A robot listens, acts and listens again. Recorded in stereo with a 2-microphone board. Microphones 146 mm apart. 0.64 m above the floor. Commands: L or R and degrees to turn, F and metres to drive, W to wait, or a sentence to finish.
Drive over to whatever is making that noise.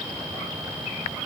W
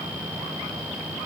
W
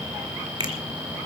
R30
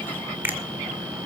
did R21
R15
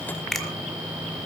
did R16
F1.0
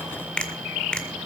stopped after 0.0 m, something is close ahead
L10
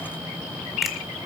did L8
W
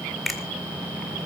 Something is in my way. I am facing the finger snap but have not reached it.